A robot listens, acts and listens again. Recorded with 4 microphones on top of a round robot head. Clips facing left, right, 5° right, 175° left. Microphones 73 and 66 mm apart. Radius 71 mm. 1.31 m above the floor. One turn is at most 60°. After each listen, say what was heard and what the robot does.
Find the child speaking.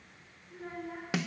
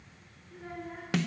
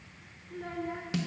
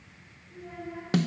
Facing the child speaking.